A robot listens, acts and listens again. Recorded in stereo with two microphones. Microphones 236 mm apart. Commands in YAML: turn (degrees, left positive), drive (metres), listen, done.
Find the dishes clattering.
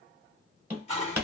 turn: 25
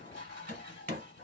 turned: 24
turn: 125
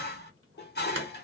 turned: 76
turn: 50
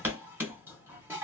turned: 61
turn: -10
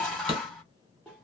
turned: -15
done: "Facing the dishes clattering."